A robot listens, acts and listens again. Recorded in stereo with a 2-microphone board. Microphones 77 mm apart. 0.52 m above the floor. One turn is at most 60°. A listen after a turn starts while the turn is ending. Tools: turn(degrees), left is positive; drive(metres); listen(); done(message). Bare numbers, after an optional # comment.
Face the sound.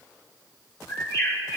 # The bird: about 55° left or 125° left.
turn(55)
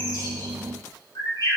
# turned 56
# So it is at 70° left.
turn(60)
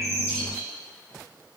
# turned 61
listen()
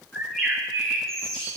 done("Found it: a bird, straight ahead.")